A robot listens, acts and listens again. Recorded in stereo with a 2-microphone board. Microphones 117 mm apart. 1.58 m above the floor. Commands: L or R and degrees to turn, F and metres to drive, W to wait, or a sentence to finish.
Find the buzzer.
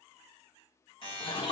L45
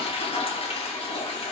W
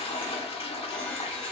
W
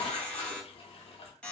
L10
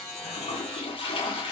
Found it: a buzzer, straight ahead.